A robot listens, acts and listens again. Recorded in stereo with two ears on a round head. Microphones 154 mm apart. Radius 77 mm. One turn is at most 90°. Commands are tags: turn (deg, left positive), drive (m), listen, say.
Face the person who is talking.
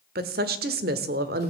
<turn deg="-60"/>
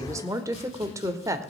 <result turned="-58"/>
<turn deg="-20"/>
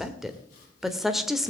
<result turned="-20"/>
<say>Facing the woman speaking.</say>